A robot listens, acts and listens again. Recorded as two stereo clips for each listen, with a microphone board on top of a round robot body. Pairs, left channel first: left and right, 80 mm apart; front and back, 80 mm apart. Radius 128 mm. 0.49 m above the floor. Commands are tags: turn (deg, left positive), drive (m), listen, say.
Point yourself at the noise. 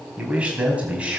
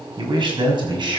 <turn deg="-165"/>
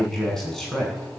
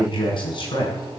<say>Found it: a man speaking, straight ahead.</say>